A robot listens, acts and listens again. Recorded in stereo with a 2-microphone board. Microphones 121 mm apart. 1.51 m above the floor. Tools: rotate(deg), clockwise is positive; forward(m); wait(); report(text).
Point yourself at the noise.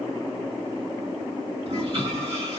rotate(50)
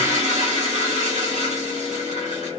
rotate(80)
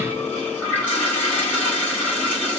rotate(-15)
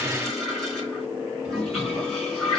report("Found it: a toilet flushing, straight ahead, 2 to 4 m away.")